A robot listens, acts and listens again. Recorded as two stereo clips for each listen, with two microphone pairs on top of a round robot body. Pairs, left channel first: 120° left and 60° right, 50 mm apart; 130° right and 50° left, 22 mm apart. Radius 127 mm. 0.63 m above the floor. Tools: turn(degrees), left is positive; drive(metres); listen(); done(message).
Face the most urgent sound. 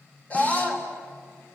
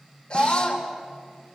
turn(degrees=180)
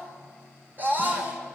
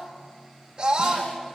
turn(degrees=-10)
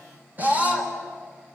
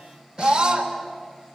done("Found it: a scream, straight ahead, over 4 m away.")